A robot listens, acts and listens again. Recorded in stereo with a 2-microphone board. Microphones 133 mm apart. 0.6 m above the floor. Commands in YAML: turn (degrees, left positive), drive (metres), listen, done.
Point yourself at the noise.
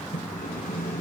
turn: 90
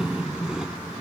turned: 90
done: "Facing the sawing."